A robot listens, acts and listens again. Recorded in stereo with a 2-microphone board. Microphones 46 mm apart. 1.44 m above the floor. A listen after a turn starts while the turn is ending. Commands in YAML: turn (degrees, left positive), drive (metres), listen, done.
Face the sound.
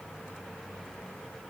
listen: true
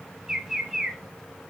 turn: -30
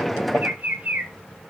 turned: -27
turn: -140
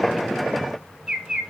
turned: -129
turn: -15
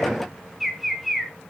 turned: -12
done: "Found it: a bird, straight ahead, under 1 m away."